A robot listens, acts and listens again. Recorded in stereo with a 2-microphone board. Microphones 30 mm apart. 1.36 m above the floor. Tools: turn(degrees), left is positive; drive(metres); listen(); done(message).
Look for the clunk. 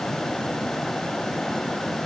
listen()
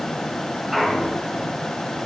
turn(degrees=-30)
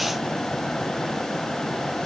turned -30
listen()
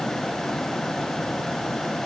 done("I heard a clunk, but can't make it out now. It was about 20° left or 140° right.")